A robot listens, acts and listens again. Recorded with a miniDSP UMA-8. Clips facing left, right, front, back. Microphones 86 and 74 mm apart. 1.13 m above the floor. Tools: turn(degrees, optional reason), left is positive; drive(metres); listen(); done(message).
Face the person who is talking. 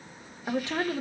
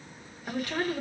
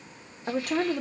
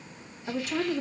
turn(degrees=20, reason="The woman speaking: 20° left.")
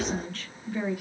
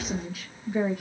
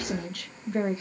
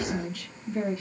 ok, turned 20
turn(degrees=-25, reason="The woman speaking is now 25° right.")
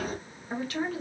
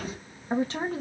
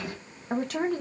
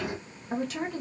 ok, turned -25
turn(degrees=-35, reason="The woman speaking is now 35° right.")
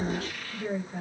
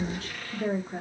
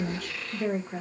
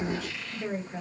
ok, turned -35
turn(degrees=-40, reason="The woman speaking is now 40° right.")
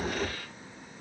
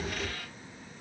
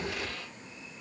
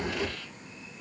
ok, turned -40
listen()
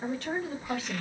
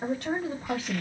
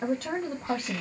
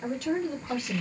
turn(degrees=-20, reason="The woman speaking is now 20° right.")
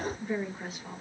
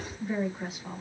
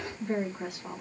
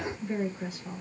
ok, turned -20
done("Facing the woman speaking.")